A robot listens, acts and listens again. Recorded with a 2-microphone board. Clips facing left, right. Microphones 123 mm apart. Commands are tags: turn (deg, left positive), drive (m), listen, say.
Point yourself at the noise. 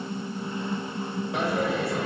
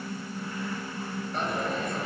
<turn deg="90"/>
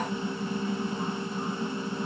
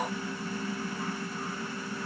<say>I heard a dropped coin from this way, but can't make it out now.</say>